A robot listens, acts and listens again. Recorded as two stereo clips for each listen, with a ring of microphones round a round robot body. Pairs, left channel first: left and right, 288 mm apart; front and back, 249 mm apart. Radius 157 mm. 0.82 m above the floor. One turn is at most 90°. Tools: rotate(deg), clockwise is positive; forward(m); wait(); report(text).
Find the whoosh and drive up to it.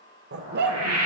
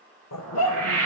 rotate(90)
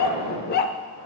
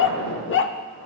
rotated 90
rotate(60)
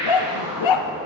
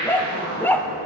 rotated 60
rotate(15)
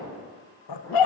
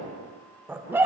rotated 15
forward(1.0)
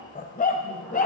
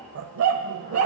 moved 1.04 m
wait()
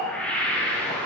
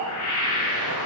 forward(1.0)
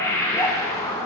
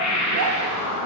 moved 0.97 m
rotate(-10)
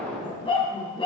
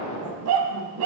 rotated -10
forward(1.0)
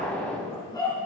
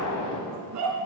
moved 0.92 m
forward(1.0)
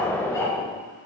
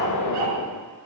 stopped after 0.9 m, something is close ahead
report("Arrived at the whoosh, straight ahead.")